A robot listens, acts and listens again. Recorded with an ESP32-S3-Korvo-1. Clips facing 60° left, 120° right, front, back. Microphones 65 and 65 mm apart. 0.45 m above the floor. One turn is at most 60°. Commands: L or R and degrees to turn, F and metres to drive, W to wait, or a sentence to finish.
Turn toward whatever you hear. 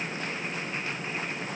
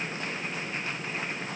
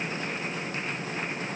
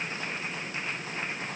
W
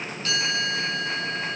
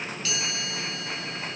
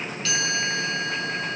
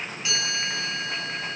L60
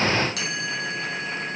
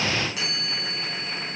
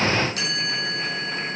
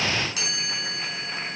L40
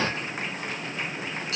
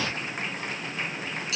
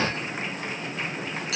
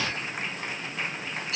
L10
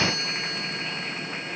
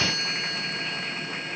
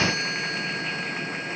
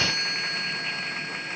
Found it: a chime, straight ahead, over 4 m away.